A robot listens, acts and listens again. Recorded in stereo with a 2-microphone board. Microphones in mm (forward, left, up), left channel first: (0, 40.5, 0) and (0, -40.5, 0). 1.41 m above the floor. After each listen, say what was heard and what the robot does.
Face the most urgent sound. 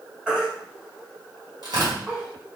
Turn 30° right.
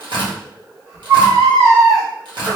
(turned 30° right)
So it is at 140° right. Turn 140° right.
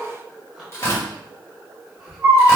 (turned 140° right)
The baby crying is now 15° right. Turn 15° right.
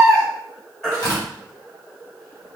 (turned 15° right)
Facing the baby crying.